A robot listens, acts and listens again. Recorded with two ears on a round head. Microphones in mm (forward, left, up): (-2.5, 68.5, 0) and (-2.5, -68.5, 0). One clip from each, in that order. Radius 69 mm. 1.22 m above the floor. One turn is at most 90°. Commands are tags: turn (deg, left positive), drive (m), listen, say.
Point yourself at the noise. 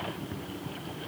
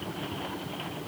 <listen/>
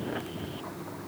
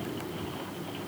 <listen/>
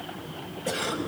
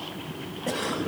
<turn deg="55"/>
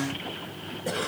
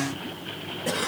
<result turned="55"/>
<say>Found it: a cough, straight ahead, over 4 m away.</say>